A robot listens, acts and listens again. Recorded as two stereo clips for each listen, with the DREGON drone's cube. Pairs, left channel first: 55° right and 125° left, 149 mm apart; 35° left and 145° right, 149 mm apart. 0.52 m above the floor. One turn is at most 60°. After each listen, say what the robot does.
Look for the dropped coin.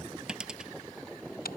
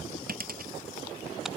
Turn 60° right.
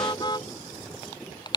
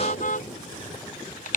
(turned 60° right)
Turn 60° right.
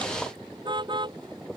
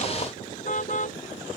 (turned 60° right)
Turn 30° right.
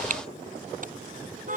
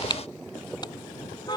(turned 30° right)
I heard a dropped coin from this way, but can't make it out now.